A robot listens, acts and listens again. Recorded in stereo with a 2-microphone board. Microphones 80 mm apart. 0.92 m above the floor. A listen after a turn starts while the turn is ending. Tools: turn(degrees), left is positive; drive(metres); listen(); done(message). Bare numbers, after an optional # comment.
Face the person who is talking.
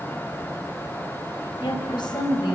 turn(90)
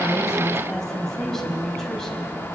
done("Found it: a woman speaking, straight ahead, over 4 m away.")